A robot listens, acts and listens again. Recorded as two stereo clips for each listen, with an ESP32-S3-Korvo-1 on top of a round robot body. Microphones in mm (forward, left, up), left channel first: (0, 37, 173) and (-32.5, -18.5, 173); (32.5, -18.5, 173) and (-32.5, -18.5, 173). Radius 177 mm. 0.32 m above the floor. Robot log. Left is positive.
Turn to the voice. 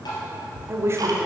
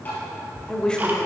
note: The woman speaking: 75° right.
cmd yaw -75
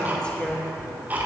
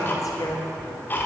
note: The woman speaking is now 15° right.
cmd yaw -15
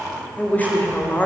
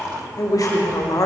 end: Facing the woman speaking, 1 to 2 m away.